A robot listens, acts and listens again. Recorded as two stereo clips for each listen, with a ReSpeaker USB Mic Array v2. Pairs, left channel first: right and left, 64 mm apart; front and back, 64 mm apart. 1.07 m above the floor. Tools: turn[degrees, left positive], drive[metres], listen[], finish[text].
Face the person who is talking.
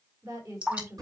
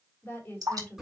Thought: The woman speaking: 60° left.
Action: turn[60]
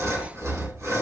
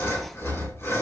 Action: listen[]
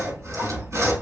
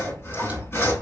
Action: listen[]
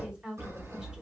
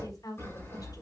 Thought: The woman speaking is now 15° left.
Action: turn[15]
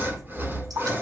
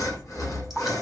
Action: listen[]
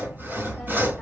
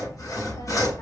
Action: listen[]
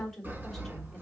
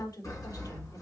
Action: finish[Facing the woman speaking, 2 to 4 m away.]